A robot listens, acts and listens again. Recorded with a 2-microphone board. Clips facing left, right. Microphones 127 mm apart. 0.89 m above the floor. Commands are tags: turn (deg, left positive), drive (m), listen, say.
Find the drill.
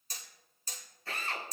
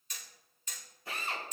<turn deg="-15"/>
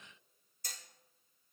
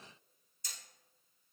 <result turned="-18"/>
<listen/>
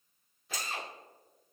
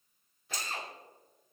<say>Facing the drill, 2 to 4 m away.</say>